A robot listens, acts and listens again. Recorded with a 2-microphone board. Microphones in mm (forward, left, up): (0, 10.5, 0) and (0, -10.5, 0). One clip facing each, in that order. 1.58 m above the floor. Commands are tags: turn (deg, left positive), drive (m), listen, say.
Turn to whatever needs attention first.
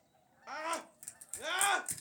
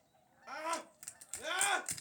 <turn deg="25"/>
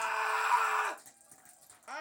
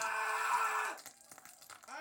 <turn deg="135"/>
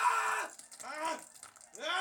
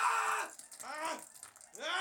<say>Found it: a scream, straight ahead, 1 to 2 m away.</say>